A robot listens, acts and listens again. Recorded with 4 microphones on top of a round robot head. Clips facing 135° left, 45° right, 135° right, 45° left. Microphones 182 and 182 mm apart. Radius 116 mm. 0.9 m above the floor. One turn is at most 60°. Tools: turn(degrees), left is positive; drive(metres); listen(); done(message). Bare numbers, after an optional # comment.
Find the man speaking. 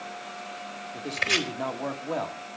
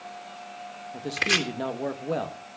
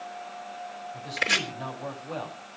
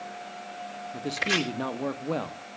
# The man speaking: 15° left.
turn(15)
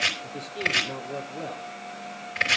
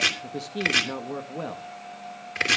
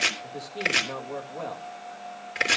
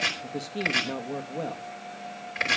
# The man speaking is now 25° right.
turn(-25)
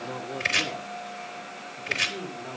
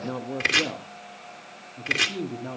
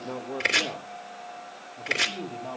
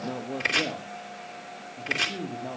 # The man speaking is now 35° right.
turn(-35)
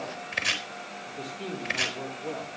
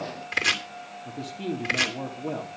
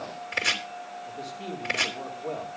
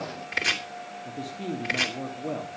# The man speaking is now 10° right.
turn(-10)
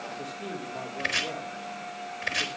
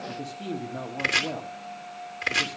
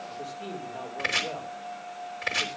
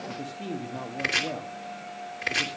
done("Facing the man speaking.")